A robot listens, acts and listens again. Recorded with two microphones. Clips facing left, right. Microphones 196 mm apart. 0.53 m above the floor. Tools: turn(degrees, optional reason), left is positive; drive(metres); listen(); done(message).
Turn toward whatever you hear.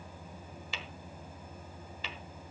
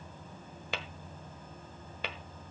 turn(degrees=-60, reason="The tapping: about 60° right or 120° right.")
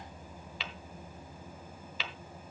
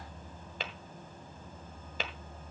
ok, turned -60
turn(degrees=-50, reason="So it is at 50° right.")
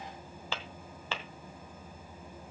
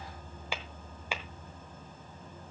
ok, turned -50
turn(degrees=-10, reason="The tapping is now 10° right.")
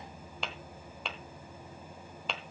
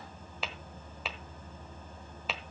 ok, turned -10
done("Facing the tapping, 1 to 2 m away.")